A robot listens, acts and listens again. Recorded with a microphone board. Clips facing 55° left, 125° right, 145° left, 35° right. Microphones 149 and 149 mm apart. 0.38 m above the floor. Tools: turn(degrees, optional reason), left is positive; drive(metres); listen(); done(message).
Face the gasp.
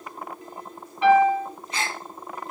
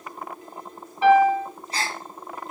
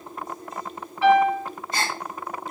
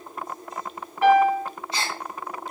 turn(degrees=-175, reason="The gasp: 175° right.")
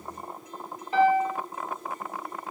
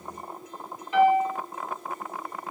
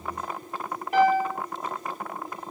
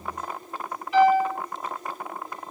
done("I heard a gasp from this way, but can't make it out now.")